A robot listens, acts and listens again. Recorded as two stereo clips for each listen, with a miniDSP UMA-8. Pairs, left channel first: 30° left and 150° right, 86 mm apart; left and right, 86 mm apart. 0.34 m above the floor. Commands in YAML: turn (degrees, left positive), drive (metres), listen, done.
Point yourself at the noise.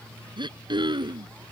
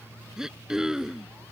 turn: -175
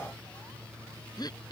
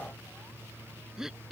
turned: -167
done: "Found it: throat clearing, straight ahead."